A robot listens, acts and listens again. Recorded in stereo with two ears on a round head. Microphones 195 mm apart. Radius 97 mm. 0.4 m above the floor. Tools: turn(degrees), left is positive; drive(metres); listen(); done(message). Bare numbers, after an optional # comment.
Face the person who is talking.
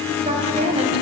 # The woman speaking: about 30° right or 150° right.
turn(-30)
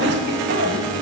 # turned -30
# So it is at 115° right.
turn(-115)
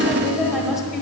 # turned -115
done("Facing the woman speaking, 1 to 2 m away.")